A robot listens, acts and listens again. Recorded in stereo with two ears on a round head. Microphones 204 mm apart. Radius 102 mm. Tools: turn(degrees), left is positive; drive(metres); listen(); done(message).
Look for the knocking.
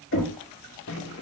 turn(degrees=60)
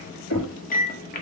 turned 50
turn(degrees=70)
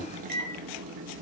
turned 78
done("Found it: knocking, straight ahead.")